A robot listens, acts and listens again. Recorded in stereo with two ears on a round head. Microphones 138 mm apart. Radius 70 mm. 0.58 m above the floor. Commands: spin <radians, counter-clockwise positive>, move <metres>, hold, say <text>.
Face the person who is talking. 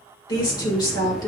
spin 0.44
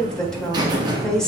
say Facing the woman speaking, 1 to 2 m away.